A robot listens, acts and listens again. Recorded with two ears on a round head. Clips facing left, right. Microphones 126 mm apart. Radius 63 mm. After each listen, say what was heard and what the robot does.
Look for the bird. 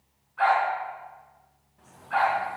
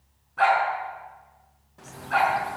Turn 90° right.
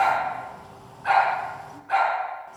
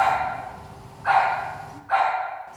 Found it: a bird, straight ahead.